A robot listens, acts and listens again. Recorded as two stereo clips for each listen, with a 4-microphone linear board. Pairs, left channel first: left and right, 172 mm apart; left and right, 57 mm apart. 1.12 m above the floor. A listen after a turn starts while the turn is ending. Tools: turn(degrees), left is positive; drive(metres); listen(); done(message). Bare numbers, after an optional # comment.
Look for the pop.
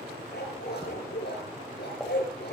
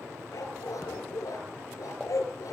turn(30)
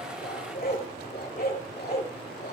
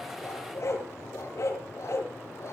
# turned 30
listen()
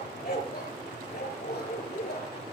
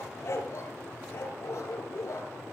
done("I heard a pop, but can't make it out now. It was about 25° right or 145° left.")